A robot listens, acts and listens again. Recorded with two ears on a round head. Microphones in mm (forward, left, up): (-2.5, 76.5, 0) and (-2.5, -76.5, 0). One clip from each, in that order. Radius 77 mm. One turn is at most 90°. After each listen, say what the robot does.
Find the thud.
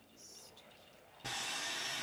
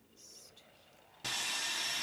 Keep listening.
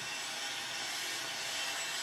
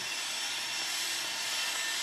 Keep listening.
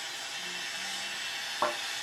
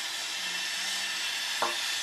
Turn 20° right.
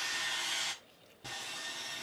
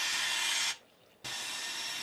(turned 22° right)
Keep listening.
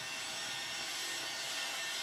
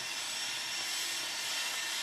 I heard a thud, but can't make it out now. It was about straight ahead or 135° right.